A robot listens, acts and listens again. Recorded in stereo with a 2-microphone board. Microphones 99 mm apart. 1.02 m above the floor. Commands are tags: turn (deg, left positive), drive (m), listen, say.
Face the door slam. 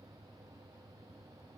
<listen/>
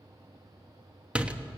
<turn deg="-30"/>
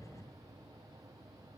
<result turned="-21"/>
<listen/>
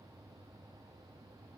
<say>I heard a door slam, but can't make it out now. It was about 10° left or 145° right.</say>